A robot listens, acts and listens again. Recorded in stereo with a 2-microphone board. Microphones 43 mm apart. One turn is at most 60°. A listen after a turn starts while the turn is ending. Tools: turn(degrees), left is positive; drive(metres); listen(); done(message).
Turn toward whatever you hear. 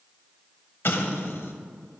turn(degrees=60)
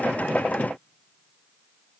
listen()
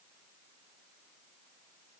done("I heard an explosion, but can't make it out now. It was about 5° left or 55° left.")